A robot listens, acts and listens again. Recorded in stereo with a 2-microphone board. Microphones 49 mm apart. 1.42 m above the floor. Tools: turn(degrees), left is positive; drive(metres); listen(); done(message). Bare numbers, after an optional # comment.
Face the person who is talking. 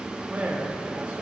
# The man speaking: about 30° right or 150° right.
turn(-30)
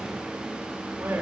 # So it is at 120° right.
turn(-120)
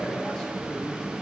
# The man speaking is now 10° left.
turn(10)
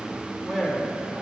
done("Facing the man speaking, 2 to 4 m away.")